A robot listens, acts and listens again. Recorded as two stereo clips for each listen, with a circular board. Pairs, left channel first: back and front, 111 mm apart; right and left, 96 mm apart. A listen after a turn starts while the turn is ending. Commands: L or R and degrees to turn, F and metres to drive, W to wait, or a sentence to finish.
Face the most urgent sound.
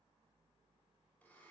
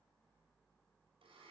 W
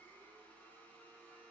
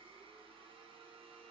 W
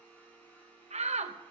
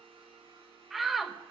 Facing the shout, under 1 m away.